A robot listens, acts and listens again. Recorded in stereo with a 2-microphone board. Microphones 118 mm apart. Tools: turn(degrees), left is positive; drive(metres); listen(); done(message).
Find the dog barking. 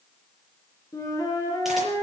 listen()
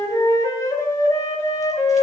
listen()
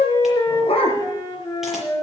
turn(degrees=50)
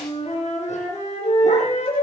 listen()
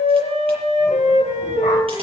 listen()
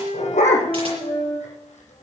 turn(degrees=90)
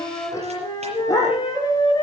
turn(degrees=30)
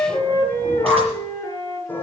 turn(degrees=15)
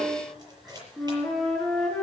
listen()
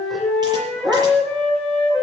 done("Facing the dog barking, over 4 m away.")